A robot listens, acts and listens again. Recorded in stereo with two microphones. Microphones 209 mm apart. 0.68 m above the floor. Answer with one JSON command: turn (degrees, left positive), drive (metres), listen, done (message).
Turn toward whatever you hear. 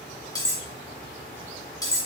{"turn": 15}
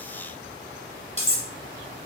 {"turn": 150}
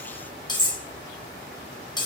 {"turn": 20}
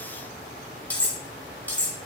{"done": "Facing the cutlery clinking, 1 to 2 m away."}